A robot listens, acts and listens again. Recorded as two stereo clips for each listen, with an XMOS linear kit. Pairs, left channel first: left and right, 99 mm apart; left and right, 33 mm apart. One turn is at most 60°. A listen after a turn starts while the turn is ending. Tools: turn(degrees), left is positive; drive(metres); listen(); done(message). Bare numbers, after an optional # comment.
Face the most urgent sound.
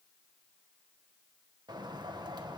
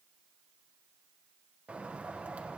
listen()
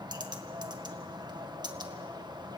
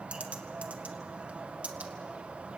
listen()
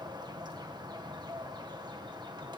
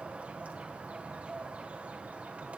done("I can't make out anything urgent, only a bird.")